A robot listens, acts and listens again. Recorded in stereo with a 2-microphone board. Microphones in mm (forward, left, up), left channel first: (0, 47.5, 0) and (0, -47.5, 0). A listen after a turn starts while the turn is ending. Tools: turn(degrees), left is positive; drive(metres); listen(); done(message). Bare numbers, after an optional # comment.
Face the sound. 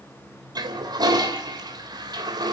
# The toilet flushing: about 45° right or 135° right.
turn(-45)
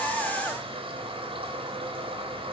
# So it is at 85° right.
turn(-85)
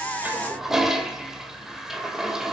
done("Facing the toilet flushing, 2 to 4 m away.")